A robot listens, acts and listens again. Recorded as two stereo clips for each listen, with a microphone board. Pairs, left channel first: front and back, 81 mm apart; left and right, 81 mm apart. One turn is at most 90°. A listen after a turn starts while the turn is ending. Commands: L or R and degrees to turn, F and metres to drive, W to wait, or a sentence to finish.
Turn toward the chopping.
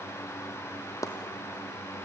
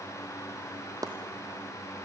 R50
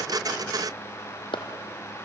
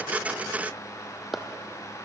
Facing the chopping.